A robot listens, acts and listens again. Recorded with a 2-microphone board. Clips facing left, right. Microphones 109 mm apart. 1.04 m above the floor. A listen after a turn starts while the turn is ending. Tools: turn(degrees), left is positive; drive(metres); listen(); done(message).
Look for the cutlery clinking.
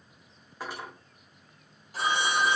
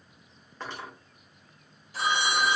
turn(degrees=30)
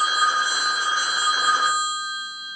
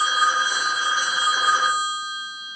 listen()
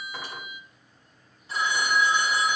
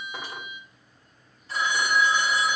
listen()
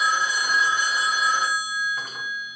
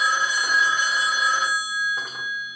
done("I heard cutlery clinking, but can't make it out now. It was about 20° right or 140° left.")